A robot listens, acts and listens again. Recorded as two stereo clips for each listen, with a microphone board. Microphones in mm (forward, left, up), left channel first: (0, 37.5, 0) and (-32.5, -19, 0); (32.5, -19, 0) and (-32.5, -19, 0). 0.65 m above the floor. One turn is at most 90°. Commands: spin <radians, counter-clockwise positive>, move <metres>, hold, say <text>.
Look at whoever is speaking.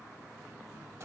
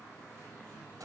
hold
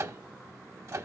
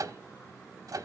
hold
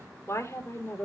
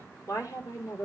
spin 0.26
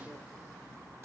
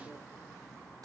spin -0.26
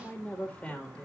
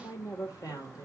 spin -0.26
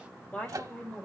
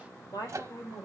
spin -0.17
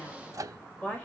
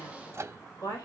say Facing the woman speaking, 2 to 4 m away.